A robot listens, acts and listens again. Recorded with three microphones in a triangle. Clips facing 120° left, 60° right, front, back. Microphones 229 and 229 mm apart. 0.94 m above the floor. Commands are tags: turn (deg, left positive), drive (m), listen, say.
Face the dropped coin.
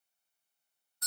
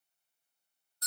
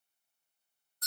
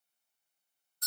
<listen/>
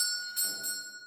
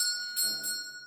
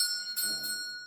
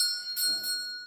<listen/>
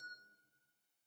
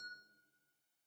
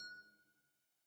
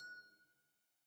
<say>I can't make out a dropped coin, only a doorbell.</say>